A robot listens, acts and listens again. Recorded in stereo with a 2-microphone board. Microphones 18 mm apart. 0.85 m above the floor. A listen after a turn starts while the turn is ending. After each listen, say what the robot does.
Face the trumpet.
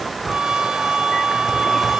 Turn 70° right.
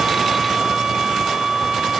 Turn 40° right.
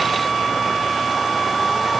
Facing the trumpet.